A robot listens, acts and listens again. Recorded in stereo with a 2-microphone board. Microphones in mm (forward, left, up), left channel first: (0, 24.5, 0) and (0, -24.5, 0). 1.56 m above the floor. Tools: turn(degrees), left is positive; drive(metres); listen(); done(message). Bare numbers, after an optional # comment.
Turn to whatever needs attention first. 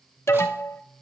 # The alarm: about 65° left or 115° left.
turn(65)
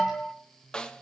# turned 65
# So it is at 15° left.
turn(15)
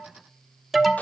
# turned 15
done("Facing the alarm, 1 to 2 m away.")